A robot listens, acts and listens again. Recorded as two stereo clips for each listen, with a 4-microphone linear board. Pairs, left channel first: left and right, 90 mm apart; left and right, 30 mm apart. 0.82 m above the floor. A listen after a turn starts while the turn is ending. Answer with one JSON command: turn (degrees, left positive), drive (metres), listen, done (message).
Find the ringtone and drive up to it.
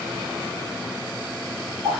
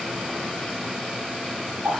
{"listen": true}
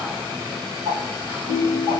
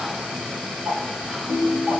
{"turn": -60}
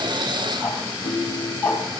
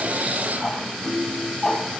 {"turn": -60}
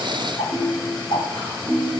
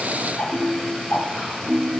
{"drive": 1.0}
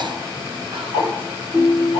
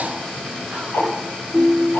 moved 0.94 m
{"turn": -10}
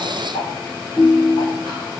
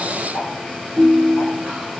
{"drive": 1.0}
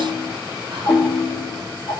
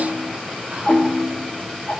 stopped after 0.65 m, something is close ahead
{"turn": 10}
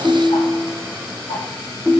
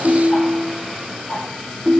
{"done": "Arrived at the ringtone, straight ahead."}